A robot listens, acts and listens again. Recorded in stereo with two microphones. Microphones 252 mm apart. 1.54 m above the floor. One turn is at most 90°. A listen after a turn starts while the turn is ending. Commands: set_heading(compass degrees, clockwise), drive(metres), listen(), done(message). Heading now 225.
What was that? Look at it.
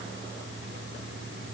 listen()
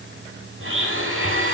set_heading(285)
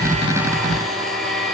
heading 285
done("Found it: a blender, straight ahead, over 4 m away.")